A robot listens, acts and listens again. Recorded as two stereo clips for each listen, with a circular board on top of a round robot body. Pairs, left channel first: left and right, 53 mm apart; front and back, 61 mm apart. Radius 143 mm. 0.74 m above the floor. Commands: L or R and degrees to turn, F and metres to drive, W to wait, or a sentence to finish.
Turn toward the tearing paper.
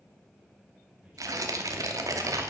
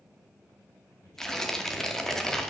R85
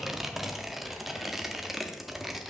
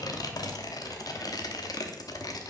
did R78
Found it: tearing paper, straight ahead, 1 to 2 m away.